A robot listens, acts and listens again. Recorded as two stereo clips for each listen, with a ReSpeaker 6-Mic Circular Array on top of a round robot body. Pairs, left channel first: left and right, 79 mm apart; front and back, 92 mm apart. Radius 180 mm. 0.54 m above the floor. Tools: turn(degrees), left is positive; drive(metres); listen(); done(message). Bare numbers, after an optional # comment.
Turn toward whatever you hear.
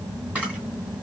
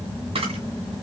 # The camera shutter: 165° right.
turn(-165)
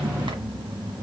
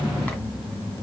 listen()
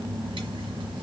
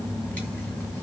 listen()
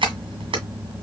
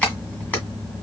# The camera shutter is now 75° right.
turn(-75)
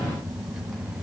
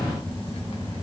listen()
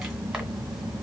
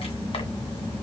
listen()
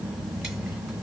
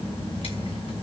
done("Facing where the camera shutter came from. I can't hear it now.")